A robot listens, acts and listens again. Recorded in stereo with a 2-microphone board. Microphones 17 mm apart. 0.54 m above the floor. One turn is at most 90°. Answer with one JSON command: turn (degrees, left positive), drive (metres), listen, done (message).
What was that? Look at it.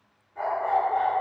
{"turn": 25}
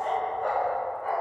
{"turn": 90}
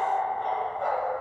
{"turn": 25}
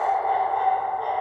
{"turn": -25}
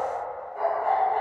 {"turn": -15}
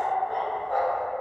{"done": "Found it: a dog barking, straight ahead."}